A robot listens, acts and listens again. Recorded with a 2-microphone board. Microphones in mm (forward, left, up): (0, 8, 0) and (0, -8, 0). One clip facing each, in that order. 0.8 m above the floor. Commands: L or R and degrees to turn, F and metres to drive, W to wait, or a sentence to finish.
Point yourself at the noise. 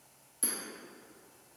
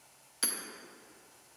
R45
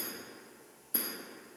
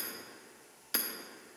R85
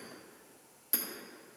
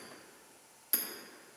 R15
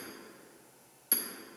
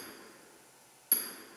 Facing the hammering.